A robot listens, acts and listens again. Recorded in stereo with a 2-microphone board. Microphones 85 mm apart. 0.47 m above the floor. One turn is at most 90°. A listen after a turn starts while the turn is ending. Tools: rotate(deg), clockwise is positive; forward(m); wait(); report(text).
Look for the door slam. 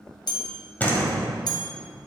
rotate(-20)
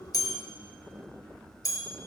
wait()
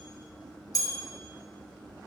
report("I heard a door slam, but can't make it out now. It was about straight ahead or 140° left.")